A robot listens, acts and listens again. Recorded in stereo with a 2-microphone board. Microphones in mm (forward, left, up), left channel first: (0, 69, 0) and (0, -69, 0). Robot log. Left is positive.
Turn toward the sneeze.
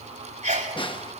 note: The sneeze: about 65° right or 115° right.
cmd yaw -65
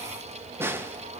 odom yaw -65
cmd idle
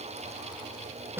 end: I heard a sneeze, but can't make it out now. It was about straight ahead or 50° right.